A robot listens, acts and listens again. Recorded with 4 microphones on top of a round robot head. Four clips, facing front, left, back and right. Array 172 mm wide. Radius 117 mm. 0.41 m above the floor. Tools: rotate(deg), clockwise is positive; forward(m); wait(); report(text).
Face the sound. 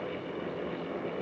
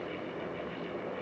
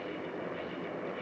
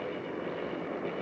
wait()
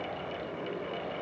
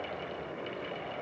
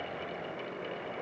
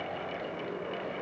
wait()
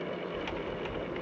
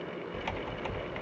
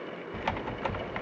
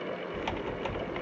rotate(175)
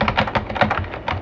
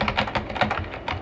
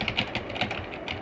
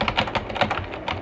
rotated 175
report("Facing the typing on a keyboard, under 1 m away.")